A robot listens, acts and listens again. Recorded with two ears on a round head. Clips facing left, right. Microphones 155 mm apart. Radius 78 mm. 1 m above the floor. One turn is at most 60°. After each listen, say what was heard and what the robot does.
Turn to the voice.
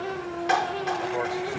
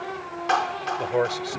The man speaking: about 50° right or 130° right. Turn 50° right.
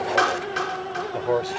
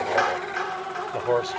Facing the man speaking.